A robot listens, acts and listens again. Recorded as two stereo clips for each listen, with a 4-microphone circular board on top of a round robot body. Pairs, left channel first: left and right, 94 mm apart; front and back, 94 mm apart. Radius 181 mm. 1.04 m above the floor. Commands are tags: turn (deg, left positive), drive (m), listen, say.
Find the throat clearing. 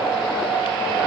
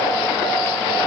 <listen/>
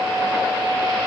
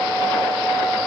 <listen/>
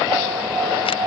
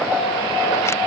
<say>I can't make out throat clearing.</say>